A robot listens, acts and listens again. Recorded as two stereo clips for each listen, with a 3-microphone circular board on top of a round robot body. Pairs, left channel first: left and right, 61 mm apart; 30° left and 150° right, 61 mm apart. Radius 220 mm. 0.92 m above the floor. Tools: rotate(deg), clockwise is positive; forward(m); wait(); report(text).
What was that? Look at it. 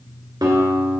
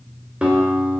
rotate(75)
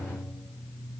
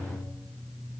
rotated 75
rotate(10)
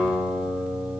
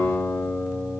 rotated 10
report("Facing the guitar, 1 to 2 m away.")